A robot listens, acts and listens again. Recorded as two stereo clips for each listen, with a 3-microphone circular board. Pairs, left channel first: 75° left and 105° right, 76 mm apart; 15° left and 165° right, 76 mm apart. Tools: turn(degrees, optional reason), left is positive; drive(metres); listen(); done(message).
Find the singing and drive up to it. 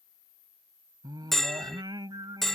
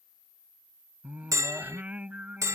turn(degrees=-95, reason="The singing: 95° right.")
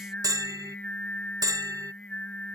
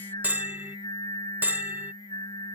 drive(metres=1.0)
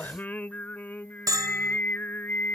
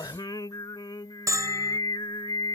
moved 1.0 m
turn(degrees=10, reason="The singing is now 10° left.")
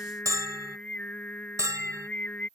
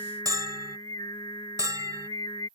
drive(metres=1.0)
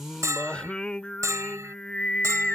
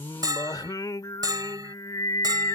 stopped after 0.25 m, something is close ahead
done("Arrived at the singing, straight ahead.")